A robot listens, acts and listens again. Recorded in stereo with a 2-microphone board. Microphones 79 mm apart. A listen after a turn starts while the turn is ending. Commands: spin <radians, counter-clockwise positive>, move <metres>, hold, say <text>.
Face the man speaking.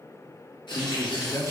spin 0.70
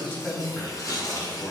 spin 0.44
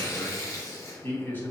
spin 0.44
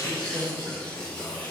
spin 0.17
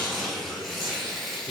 say Found it: a man speaking, straight ahead.